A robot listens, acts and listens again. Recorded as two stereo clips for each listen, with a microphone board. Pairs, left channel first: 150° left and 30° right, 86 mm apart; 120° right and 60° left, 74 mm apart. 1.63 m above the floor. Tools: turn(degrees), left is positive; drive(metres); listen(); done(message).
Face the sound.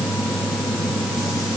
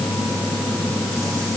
listen()
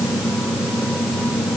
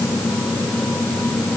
listen()
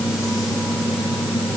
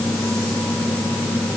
done("I can't make out anything to turn to.")